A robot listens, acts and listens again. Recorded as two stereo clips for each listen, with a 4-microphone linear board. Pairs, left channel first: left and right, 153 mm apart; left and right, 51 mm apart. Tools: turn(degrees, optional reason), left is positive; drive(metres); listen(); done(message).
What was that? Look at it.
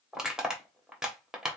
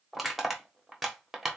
turn(degrees=-30)
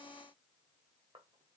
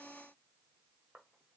listen()
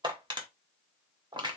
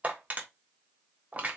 turn(degrees=-145, reason="So it is at 145° right.")
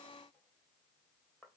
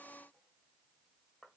listen()
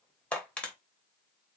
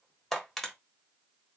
turn(degrees=10, reason="The crushing is now 10° left.")
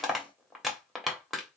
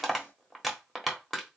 done("Found it: crushing, straight ahead.")